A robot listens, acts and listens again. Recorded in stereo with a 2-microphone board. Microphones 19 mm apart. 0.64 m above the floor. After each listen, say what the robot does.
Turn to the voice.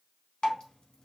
Keep listening.
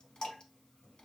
Keep listening.
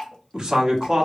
Turn 45° right.
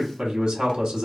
Turn 75° right.
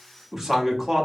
Turn 25° right.
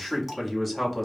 Found it: a man speaking, straight ahead, under 1 m away.